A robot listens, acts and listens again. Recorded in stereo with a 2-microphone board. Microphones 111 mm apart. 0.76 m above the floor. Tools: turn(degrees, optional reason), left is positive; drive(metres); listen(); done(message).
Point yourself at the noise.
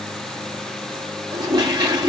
turn(degrees=-40, reason="The toilet flushing: about 40° right or 140° right.")
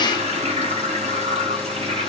turn(degrees=-95, reason="So it is at 95° right.")
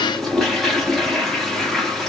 done("Facing the toilet flushing.")